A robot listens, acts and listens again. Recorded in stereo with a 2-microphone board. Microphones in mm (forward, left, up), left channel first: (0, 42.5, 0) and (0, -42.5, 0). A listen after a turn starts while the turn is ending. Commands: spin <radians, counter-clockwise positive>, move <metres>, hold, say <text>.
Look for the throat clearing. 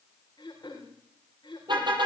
spin 0.96
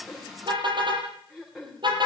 say Facing the throat clearing, over 4 m away.